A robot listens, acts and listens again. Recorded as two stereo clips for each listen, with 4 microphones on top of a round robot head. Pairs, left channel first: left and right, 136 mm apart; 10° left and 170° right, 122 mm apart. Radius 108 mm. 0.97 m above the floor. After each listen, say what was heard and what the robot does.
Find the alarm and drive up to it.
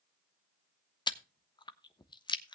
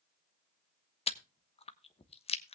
Keep listening.
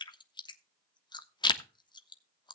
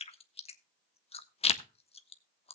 Keep listening.
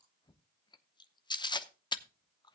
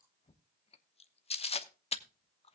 I can't make out an alarm to turn to.